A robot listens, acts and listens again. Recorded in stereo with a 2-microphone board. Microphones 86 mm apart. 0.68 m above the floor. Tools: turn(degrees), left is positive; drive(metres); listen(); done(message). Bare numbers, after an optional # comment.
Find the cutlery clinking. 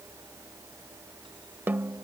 listen()
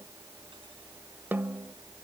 listen()
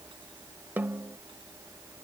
done("I can't make out cutlery clinking to turn to.")